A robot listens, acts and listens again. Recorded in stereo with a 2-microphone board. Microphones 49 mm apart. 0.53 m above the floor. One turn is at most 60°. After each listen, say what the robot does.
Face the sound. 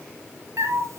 Turn 60° right.
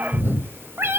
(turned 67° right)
Turn 55° right.
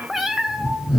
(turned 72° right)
Turn 15° right.
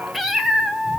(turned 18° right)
Turn 10° right.
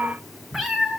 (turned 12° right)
Facing the cat meowing, 2 to 4 m away.